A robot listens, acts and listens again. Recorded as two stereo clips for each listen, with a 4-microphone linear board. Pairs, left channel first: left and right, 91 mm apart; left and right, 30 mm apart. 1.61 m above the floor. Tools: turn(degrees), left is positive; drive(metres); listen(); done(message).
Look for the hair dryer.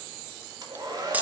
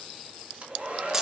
turn(degrees=-45)
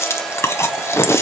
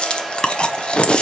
done("Found it: a hair dryer, straight ahead.")